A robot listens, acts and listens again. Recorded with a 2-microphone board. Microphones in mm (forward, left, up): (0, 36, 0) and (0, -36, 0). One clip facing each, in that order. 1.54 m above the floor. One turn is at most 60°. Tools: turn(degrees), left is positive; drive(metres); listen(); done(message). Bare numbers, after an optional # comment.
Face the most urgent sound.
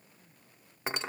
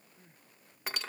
# The crying: about 35° right or 145° right.
turn(-35)
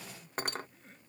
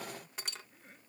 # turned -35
done("Found it: crying, straight ahead.")